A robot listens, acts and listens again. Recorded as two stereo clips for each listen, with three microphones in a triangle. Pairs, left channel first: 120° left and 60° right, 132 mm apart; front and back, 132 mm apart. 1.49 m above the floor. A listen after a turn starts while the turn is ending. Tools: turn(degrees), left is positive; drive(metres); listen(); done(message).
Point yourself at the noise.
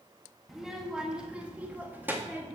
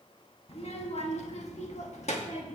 turn(degrees=10)
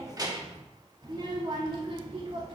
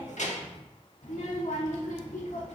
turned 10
turn(degrees=-15)
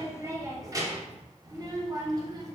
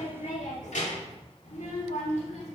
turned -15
done("Facing the child speaking.")